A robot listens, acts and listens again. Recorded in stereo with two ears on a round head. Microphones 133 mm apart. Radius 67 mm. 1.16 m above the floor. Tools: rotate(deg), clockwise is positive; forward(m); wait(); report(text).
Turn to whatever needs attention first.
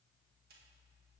wait()
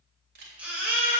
rotate(30)
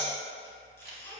rotate(-20)
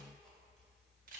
wait()
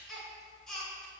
report("Facing the baby crying, 2 to 4 m away.")